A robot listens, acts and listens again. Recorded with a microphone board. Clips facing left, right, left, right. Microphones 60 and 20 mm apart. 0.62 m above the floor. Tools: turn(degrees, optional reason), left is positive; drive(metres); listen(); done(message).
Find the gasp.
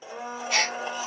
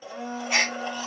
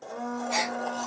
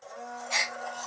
turn(degrees=-20, reason="The gasp: about 20° right or 160° right.")
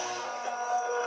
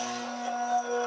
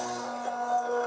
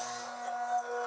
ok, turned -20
listen()
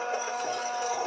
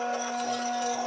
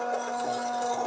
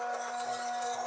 done("I heard a gasp, but can't make it out now. It was about straight ahead or 140° right.")